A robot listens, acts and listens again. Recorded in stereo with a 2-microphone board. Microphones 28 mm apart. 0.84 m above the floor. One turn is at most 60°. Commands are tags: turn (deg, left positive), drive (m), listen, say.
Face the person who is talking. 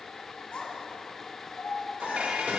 <turn deg="40"/>
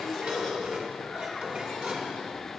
<listen/>
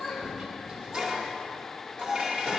<say>Facing the child speaking, 2 to 4 m away.</say>